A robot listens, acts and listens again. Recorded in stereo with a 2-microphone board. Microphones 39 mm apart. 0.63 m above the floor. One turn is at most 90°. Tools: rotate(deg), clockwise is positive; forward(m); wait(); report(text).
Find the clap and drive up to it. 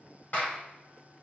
rotate(-45)
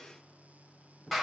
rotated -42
forward(1.0)
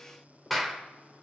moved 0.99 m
forward(1.0)
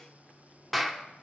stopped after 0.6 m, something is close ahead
report("I am next to the clap.")